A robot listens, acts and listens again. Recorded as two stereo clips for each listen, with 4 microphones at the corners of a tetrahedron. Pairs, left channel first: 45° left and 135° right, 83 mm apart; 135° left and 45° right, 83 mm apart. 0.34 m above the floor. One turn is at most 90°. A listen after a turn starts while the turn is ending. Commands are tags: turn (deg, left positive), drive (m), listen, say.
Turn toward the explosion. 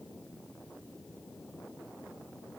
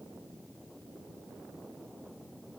<listen/>
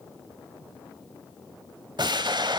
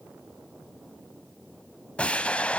<turn deg="-90"/>
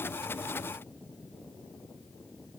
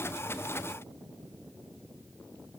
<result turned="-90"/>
<turn deg="-60"/>
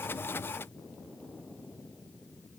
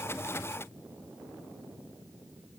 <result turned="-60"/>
<say>Facing where the explosion came from. I can't hear it now.</say>